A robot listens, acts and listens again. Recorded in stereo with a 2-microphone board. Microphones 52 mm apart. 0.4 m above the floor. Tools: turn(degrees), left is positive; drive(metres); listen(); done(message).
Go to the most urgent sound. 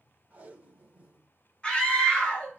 turn(degrees=20)
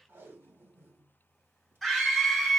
drive(metres=1.0)
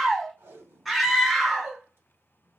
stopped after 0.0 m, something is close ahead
done("Something is in my way. I am facing the scream but have not reached it.")